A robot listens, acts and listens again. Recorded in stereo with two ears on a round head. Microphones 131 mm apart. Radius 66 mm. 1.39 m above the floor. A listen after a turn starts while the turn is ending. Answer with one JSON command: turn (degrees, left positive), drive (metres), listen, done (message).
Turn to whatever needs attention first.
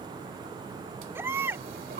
{"turn": -15}
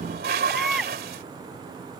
{"done": "Found it: a baby crying, straight ahead."}